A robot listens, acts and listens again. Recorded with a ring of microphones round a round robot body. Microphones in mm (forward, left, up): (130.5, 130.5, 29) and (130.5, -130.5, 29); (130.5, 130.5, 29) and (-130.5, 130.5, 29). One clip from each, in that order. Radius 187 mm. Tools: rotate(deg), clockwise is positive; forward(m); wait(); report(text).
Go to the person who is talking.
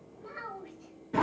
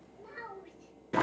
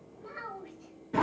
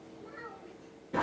rotate(20)
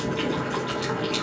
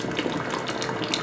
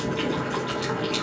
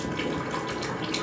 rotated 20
wait()
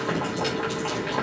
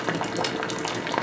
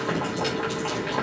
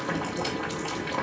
wait()
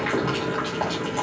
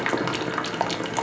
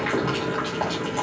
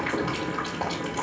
report("Facing where the child speaking came from. I can't hear it now. I did not reach it.")